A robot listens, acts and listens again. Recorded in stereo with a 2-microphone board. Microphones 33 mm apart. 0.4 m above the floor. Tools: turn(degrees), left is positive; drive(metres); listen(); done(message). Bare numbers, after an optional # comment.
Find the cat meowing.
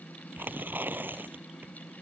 listen()
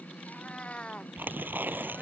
# The cat meowing: about 35° left or 145° left.
turn(35)
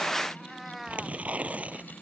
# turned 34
done("Facing the cat meowing.")